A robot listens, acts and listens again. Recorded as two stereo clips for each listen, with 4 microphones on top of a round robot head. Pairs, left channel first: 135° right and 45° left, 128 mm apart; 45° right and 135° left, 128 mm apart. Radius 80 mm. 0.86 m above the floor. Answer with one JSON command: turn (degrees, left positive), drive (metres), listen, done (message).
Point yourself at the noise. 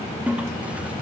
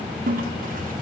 {"turn": 130}
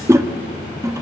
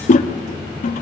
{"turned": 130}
{"turn": -20}
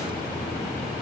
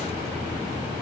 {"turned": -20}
{"listen": true}
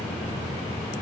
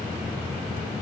{"listen": true}
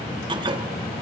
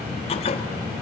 {"done": "Found it: a toilet flushing, straight ahead."}